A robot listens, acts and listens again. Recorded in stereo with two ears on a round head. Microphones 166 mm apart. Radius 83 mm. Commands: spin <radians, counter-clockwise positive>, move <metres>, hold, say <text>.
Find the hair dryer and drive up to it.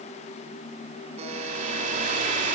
spin -0.70
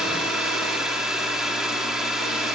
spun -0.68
move 1.0
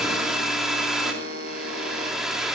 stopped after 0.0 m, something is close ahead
say Something is in my way. I am facing the hair dryer but have not reached it.